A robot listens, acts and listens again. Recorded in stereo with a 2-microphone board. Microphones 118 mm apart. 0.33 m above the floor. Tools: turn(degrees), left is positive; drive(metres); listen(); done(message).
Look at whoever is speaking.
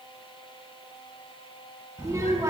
turn(degrees=-30)
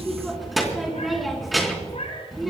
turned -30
done("Facing the child speaking.")